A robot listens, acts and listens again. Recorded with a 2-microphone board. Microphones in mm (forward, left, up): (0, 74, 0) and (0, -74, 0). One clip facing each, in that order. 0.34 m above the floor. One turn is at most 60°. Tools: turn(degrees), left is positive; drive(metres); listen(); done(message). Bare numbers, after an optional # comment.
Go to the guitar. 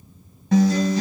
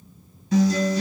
# The guitar: about 60° left or 120° left.
turn(60)
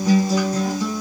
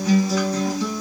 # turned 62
# So it is at 30° left.
turn(30)
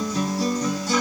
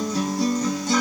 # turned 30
drive(1.0)
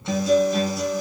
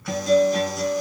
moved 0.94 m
drive(1.0)
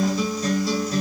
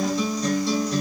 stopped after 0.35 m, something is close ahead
done("I am next to the guitar.")